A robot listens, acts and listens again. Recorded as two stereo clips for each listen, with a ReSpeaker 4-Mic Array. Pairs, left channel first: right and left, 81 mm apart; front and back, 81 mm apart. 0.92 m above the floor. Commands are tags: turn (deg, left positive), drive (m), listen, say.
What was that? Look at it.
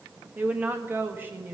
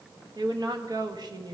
<turn deg="150"/>
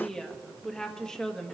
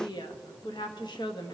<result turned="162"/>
<turn deg="-10"/>
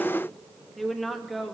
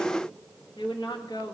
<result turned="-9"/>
<say>Facing the woman speaking, 1 to 2 m away.</say>